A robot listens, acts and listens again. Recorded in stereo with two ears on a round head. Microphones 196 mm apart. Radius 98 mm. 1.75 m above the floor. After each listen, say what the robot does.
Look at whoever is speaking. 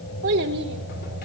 Turn 55° right.
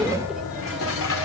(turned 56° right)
Keep listening.
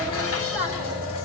Facing the child speaking.